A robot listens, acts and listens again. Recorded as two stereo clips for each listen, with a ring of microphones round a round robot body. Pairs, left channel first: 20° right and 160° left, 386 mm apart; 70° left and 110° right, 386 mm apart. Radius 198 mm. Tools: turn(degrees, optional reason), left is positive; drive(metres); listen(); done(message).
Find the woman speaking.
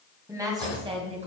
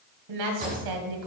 turn(degrees=-130, reason="The woman speaking: 130° right.")
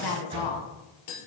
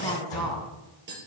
turn(degrees=-15, reason="The woman speaking is now 15° right.")
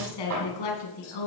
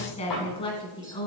turn(degrees=-10, reason="The woman speaking is now 10° right.")
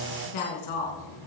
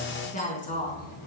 done("Found it: a woman speaking, straight ahead, 2 to 4 m away.")